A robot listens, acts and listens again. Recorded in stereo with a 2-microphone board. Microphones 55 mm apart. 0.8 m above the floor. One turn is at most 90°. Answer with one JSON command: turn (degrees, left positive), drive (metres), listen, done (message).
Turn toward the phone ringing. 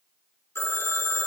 {"turn": 50}
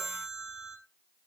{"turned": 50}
{"done": "Facing the phone ringing."}